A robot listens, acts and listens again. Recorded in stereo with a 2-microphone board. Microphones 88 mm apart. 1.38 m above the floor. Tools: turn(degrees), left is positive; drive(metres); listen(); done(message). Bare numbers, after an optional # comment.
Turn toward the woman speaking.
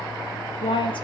# The woman speaking: about 70° left or 110° left.
turn(70)
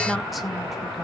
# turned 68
listen()
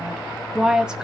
# So it is at 10° right.
turn(-10)
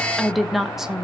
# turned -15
done("Found it: a woman speaking, straight ahead, 1 to 2 m away.")